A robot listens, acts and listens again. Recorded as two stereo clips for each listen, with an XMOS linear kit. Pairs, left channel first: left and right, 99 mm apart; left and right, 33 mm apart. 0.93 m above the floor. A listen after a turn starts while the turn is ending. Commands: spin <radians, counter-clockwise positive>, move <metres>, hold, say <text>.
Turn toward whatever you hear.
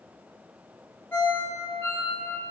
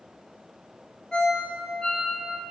spin 0.44
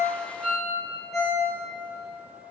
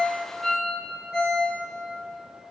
say Facing the ringtone.